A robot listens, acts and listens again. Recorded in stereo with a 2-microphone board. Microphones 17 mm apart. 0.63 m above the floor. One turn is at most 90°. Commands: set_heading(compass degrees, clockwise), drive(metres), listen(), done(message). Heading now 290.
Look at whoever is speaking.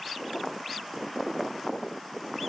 listen()
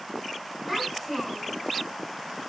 set_heading(270)
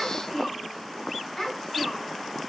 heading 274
set_heading(184)
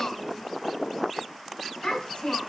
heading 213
set_heading(133)
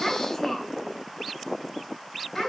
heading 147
set_heading(132)
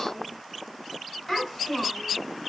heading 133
done("Found it: a child speaking, straight ahead, 2 to 4 m away.")